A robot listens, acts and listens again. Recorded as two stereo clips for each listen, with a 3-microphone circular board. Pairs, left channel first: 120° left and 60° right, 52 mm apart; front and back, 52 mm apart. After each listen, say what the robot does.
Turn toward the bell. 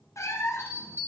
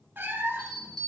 Turn 75° left.
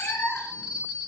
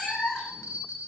Turn 20° left.
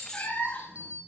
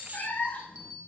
Facing the bell.